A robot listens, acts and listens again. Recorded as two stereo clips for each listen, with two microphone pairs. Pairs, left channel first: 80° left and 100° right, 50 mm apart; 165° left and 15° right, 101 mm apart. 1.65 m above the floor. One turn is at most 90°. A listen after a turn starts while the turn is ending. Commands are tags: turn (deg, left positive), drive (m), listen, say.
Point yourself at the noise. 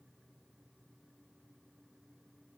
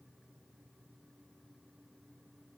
<listen/>
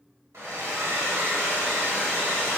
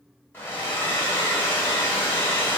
<turn deg="-90"/>
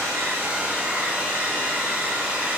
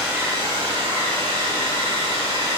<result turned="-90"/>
<turn deg="-40"/>
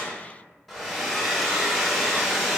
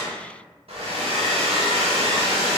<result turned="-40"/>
<turn deg="-10"/>
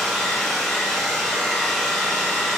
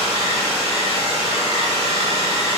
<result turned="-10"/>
<say>Facing the hair dryer.</say>